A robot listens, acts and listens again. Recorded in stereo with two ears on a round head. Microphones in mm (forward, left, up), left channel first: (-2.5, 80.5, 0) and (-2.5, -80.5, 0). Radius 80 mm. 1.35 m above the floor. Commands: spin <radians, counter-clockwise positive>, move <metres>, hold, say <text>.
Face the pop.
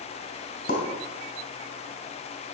spin 0.87
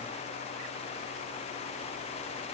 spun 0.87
hold
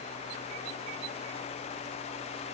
say I heard a pop, but can't make it out now. It was about straight ahead or 80° left.